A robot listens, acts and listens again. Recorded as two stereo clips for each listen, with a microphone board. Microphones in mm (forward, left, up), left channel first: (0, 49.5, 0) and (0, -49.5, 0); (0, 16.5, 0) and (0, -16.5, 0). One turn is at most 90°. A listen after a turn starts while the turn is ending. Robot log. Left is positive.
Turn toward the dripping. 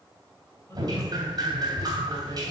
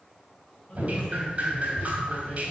note: The dripping: about 40° right or 140° right.
cmd yaw -40
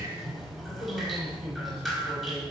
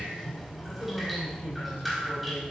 end: Facing the dripping.